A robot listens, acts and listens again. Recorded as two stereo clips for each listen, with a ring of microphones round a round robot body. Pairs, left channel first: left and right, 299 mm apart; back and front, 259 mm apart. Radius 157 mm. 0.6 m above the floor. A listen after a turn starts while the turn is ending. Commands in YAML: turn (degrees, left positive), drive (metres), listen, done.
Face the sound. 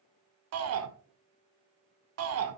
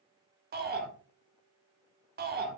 turn: -55
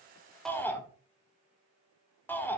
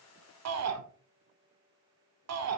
done: "Facing the shout, 1 to 2 m away."